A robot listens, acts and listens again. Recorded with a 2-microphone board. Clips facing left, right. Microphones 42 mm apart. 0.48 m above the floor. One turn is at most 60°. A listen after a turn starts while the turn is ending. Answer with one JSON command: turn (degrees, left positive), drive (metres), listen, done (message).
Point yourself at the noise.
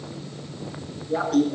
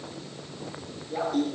{"turn": 60}
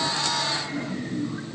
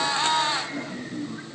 {"turn": 20}
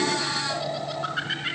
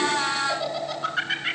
{"done": "Found it: laughter, straight ahead, over 4 m away."}